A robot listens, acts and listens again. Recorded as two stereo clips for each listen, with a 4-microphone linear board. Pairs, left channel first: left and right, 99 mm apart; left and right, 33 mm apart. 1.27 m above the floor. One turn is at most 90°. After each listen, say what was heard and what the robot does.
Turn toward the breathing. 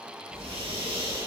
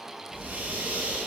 Turn 90° right.
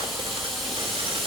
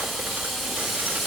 Keep listening.
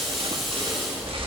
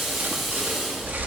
The breathing is now 10° left. Turn 10° left.
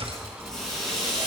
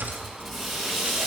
Found it: breathing, straight ahead.